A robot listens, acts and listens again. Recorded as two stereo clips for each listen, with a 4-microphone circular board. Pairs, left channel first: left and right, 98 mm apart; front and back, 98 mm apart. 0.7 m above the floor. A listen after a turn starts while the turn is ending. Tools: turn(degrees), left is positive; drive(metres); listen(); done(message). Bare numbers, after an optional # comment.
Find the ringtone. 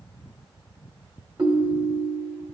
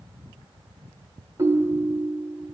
# The ringtone: 125° right.
turn(-125)
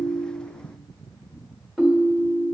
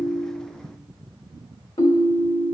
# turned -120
done("Found it: a ringtone, straight ahead.")